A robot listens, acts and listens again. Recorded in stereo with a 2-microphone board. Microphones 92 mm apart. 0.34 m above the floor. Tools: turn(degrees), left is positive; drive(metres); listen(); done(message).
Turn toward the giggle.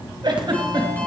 turn(degrees=-55)
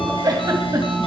turn(degrees=-55)
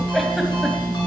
listen()
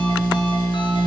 listen()
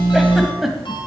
done("Found it: a giggle, straight ahead, 1 to 2 m away.")